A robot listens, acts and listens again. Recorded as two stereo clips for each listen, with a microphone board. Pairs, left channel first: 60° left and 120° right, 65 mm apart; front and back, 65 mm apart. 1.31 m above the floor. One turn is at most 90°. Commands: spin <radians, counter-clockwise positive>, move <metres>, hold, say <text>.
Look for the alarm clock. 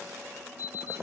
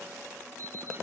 spin 0.87
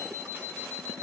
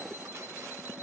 spin 0.26
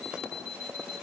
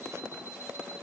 say Found it: an alarm clock, straight ahead.